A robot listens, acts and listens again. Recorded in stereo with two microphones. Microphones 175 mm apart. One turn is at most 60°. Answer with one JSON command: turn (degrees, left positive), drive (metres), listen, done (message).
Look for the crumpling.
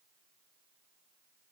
{"listen": true}
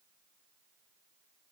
{"listen": true}
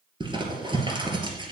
{"turn": -30}
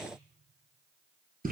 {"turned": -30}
{"turn": -60}
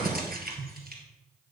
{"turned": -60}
{"turn": -60}
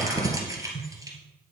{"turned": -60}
{"turn": -20}
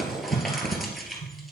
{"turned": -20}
{"done": "Facing the crumpling."}